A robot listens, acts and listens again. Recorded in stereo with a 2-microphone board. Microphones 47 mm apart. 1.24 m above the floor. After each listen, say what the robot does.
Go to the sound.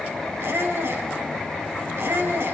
Turn 65° right.
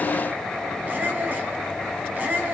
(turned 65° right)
Turn 45° right.
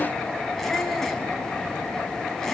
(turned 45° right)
Turn 10° left.
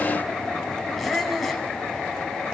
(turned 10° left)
Drive 1.0 m forward.
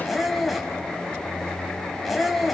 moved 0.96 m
Drive 1.0 m forward.
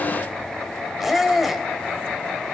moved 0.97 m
Drive 1.0 m forward.
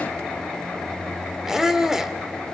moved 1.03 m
Turn 10° right.
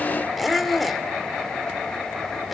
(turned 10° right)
Drive 1.0 m forward.
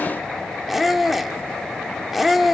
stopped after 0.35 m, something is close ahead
I am next to the squeak.